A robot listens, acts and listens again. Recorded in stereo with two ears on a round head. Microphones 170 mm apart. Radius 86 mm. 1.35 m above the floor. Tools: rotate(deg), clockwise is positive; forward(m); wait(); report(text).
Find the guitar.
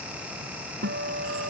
rotate(50)
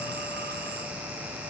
wait()
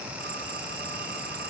wait()
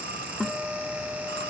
report("Found it: a guitar, straight ahead.")